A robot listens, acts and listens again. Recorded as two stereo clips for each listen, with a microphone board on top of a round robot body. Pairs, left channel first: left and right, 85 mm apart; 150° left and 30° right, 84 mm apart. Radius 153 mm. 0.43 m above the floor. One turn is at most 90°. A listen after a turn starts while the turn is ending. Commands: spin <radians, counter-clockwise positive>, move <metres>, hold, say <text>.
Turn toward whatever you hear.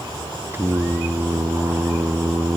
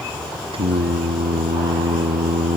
spin -0.44
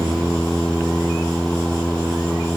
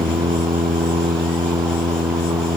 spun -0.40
say Facing the singing.